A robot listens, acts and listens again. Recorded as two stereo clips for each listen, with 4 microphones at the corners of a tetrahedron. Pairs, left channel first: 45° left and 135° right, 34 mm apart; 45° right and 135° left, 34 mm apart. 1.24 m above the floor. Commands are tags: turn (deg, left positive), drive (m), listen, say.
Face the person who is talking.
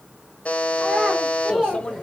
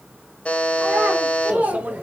<turn deg="150"/>
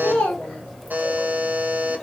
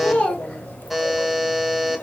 <say>Facing the child speaking.</say>